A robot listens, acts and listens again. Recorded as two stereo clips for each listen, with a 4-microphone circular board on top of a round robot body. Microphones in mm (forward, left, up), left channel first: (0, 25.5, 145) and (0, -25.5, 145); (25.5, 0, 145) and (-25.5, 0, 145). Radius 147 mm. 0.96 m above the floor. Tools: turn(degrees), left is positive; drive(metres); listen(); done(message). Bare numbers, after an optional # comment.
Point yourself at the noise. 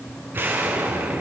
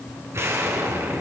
# The explosion: 145° right.
turn(-145)
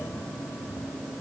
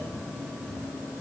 done("Facing where the explosion came from. I can't hear it now.")